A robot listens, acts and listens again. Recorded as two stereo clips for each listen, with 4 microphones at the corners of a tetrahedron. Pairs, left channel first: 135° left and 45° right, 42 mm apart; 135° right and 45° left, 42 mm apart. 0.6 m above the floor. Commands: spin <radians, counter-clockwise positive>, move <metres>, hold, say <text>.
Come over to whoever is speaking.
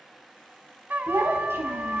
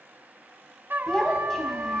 spin -1.05
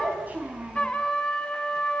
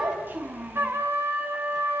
move 1.0
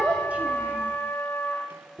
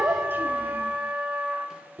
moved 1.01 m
spin 0.17
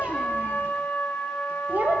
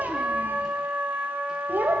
move 1.0
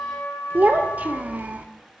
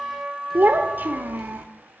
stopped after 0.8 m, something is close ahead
say Arrived at the child speaking, straight ahead.